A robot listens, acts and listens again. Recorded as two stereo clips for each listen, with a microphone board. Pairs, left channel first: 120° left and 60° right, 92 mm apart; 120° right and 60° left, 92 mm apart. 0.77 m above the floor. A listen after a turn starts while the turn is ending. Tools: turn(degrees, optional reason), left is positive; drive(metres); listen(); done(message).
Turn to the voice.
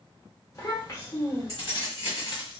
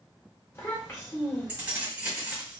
turn(degrees=180, reason="The child speaking: straight behind.")
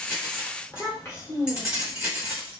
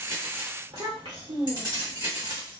turn(degrees=60, reason="The child speaking is now 60° left.")
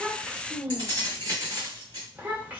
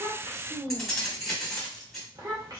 turn(degrees=10, reason="The child speaking is now 10° left.")
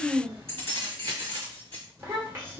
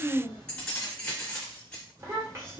done("Facing the child speaking, 1 to 2 m away.")